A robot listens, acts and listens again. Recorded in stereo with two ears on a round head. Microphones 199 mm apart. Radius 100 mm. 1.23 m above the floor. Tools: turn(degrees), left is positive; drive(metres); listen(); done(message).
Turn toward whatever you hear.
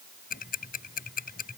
turn(degrees=45)
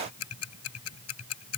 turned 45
turn(degrees=90)
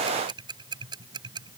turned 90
turn(degrees=-20)
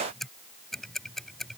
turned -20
done("Facing the ticking.")